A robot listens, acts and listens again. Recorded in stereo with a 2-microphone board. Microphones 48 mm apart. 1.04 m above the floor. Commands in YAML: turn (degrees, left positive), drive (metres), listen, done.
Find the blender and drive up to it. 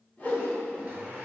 turn: -30
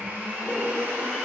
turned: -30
turn: -120
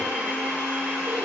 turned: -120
turn: -30
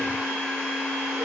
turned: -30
turn: -10
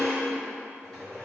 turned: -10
drive: 1.0
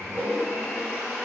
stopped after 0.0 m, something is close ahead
done: "Blocked. The blender is further on, straight ahead."